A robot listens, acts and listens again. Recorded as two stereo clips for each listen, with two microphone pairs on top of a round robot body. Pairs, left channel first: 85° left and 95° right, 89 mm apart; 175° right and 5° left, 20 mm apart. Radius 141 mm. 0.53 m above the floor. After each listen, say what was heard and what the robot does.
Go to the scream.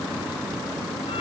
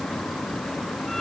Keep listening.
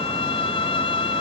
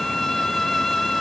Keep listening.
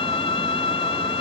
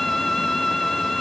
I can't make out a scream, only a violin.